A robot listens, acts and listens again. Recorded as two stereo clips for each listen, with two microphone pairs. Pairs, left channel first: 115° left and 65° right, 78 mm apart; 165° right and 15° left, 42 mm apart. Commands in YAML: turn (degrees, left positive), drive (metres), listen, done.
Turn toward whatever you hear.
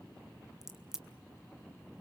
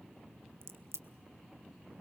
turn: 20
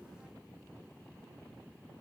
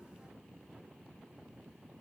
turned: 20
done: "I heard a crack from this way, but can't make it out now."